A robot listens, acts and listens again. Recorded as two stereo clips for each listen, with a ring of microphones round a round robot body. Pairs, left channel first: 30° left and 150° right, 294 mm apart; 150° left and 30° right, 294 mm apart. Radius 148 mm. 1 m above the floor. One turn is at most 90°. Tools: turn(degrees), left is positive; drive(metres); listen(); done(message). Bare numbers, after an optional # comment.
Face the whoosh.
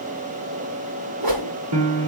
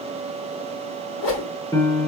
# The whoosh: 170° right.
turn(-90)
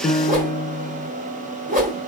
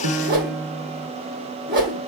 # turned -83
# The whoosh is now 85° right.
turn(-85)
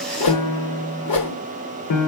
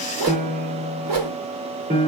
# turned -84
done("Found it: a whoosh, straight ahead, 2 to 4 m away.")